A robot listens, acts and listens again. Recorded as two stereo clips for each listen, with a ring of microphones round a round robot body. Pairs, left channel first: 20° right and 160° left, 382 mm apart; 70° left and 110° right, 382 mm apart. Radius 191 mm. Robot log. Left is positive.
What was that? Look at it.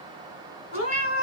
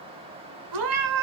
note: The cat meowing: 85° right.
cmd yaw -85
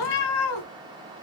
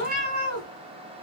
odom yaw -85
end: Facing the cat meowing.